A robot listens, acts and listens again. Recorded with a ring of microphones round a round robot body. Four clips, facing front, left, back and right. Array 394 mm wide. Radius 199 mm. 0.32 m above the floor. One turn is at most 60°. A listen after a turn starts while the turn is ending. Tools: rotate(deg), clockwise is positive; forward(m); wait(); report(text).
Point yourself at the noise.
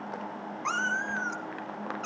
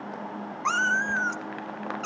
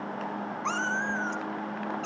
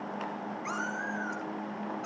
rotate(-60)
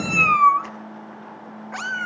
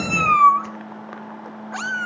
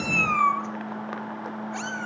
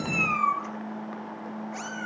rotate(-55)
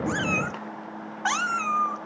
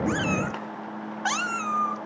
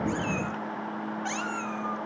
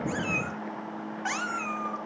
rotate(-15)
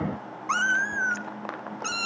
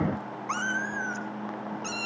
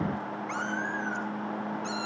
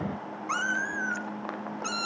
report("Found it: a cat meowing, straight ahead, 1 to 2 m away.")